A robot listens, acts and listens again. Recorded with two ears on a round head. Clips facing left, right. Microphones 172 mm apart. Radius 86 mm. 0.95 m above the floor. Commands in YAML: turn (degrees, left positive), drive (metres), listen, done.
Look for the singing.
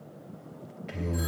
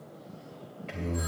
turn: 30
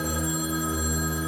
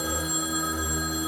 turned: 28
turn: 140
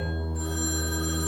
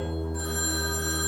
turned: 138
done: "Facing the singing, 2 to 4 m away."